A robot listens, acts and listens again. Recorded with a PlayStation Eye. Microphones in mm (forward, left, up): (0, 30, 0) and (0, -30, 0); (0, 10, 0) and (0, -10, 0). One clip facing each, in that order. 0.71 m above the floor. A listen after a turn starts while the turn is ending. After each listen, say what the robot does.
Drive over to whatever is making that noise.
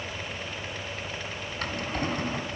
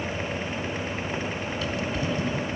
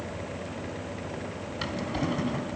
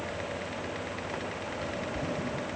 Turn 50° left.
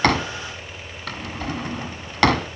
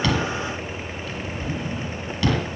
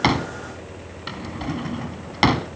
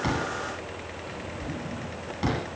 Turn 80° left.
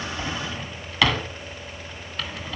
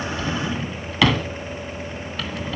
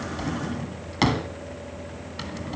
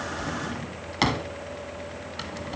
Drive 1.0 m forward.
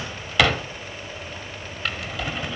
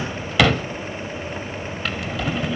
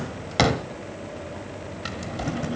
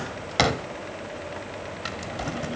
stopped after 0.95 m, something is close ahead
Arrived at the drawer, straight ahead.